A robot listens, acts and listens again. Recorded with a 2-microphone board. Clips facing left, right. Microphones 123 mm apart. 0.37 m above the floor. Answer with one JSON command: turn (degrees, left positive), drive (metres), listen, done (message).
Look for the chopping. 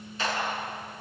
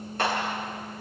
{"listen": true}
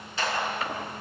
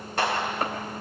{"turn": -50}
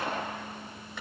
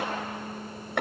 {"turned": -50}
{"turn": -80}
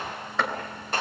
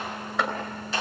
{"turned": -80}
{"done": "Facing the chopping, 2 to 4 m away."}